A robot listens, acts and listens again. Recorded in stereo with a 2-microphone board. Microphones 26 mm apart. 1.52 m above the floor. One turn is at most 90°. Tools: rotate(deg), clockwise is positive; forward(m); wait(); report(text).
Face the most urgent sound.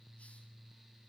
wait()
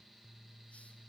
wait()
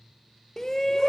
rotate(-20)
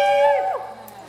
report("Found it: a shout, straight ahead.")